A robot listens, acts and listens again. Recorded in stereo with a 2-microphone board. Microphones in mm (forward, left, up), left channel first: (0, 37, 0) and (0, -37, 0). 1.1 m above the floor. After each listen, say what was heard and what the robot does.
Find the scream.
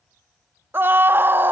The scream: about 30° right or 150° right. Turn 30° right.
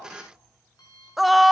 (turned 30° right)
Facing the scream, under 1 m away.